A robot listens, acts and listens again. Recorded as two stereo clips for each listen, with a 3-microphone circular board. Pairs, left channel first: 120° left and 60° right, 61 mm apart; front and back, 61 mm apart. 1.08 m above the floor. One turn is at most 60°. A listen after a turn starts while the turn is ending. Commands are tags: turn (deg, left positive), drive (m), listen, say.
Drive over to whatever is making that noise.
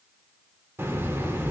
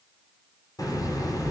<turn deg="-10"/>
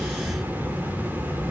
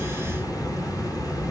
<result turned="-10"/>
<drive m="1.0"/>
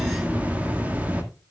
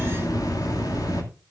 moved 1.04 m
<drive m="1.0"/>
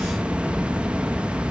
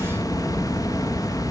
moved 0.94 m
<turn deg="10"/>
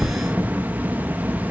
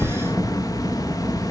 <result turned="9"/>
<drive m="1.0"/>
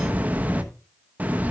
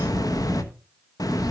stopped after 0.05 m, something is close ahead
<say>I am next to the hiss.</say>